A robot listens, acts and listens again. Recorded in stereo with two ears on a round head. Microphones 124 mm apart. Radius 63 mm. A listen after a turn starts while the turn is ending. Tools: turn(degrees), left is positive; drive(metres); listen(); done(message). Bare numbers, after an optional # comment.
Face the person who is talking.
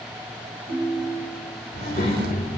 # The child speaking: about 60° left or 120° left.
turn(60)
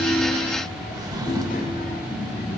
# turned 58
# So it is at 60° left.
turn(60)
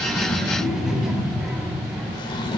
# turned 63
done("Found it: a child speaking, straight ahead.")